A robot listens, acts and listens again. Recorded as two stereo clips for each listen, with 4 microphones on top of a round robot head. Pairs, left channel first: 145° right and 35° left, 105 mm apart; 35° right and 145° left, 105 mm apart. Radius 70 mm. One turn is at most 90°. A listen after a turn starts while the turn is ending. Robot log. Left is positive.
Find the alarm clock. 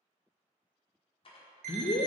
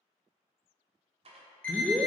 note: The alarm clock: 45° left.
cmd yaw +45
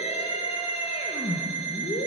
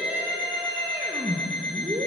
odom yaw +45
note: The alarm clock is now 10° left.
cmd yaw +10
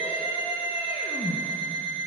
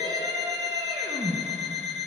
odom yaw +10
end: Found it: an alarm clock, straight ahead.